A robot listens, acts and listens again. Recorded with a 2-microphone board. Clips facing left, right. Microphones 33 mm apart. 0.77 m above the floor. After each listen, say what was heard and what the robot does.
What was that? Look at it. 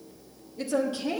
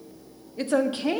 The woman speaking: about 50° right or 130° right. Turn 50° right.
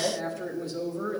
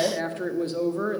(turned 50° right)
So it is at 65° right. Turn 65° right.
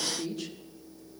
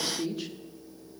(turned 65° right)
The woman speaking is now 15° right. Turn 15° right.
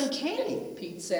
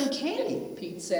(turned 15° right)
Facing the woman speaking.